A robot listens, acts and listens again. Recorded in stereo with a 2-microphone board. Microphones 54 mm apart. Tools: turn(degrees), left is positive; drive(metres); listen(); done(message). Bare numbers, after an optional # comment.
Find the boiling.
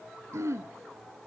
listen()
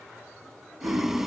turn(-30)
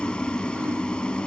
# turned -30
# So it is at 20° left.
turn(20)
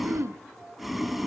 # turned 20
done("Facing the boiling, 2 to 4 m away.")